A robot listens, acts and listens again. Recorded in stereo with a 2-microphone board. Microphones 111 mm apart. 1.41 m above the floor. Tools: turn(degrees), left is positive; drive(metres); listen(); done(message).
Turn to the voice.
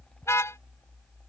listen()
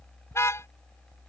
listen()
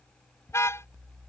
done("I can't make out anyone speaking to turn to.")